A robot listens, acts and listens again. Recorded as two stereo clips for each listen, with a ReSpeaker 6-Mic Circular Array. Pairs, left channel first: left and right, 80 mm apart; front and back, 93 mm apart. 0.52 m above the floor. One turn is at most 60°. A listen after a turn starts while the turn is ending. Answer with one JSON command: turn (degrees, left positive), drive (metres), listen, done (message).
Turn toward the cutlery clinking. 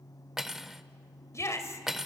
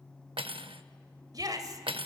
{"turn": -60}
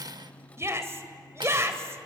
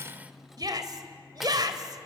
{"turn": -60}
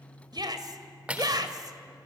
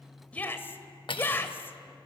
{"turn": -15}
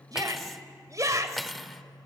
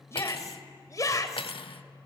{"done": "Found it: cutlery clinking, straight ahead, under 1 m away."}